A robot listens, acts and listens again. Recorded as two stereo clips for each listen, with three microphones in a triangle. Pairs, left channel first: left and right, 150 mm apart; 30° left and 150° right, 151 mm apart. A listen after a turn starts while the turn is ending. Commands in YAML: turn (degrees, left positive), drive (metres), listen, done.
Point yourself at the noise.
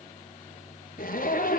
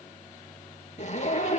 turn: 70
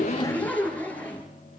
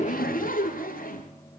turn: 10
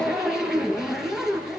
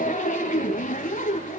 done: "Facing the zipper."